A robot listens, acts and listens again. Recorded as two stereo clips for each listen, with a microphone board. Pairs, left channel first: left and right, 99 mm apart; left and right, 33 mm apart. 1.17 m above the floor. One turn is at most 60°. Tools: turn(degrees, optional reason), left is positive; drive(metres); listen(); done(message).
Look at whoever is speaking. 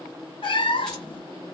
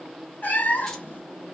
listen()
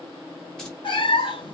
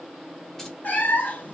listen()
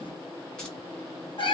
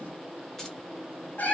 done("I can't make out anyone speaking to turn to.")